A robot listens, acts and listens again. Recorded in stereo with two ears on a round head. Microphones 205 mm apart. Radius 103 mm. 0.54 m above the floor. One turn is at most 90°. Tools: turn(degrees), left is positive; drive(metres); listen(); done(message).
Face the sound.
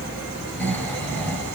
turn(degrees=30)
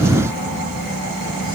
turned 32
turn(degrees=90)
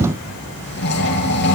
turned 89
turn(degrees=50)
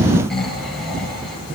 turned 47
done("Facing the snoring, over 4 m away.")